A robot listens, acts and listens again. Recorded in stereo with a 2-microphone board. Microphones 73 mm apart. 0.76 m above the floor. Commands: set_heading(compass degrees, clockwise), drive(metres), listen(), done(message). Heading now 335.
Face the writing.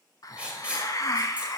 set_heading(355)
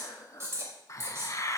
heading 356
set_heading(136)
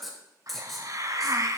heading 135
done("Found it: writing, straight ahead, 2 to 4 m away.")